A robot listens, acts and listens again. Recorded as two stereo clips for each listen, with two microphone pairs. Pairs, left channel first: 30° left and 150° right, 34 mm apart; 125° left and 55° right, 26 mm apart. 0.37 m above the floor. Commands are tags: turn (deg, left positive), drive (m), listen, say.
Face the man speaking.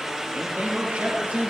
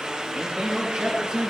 <turn deg="-120"/>
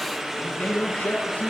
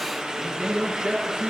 <turn deg="-15"/>
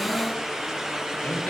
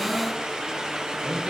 <say>Found it: a man speaking, straight ahead.</say>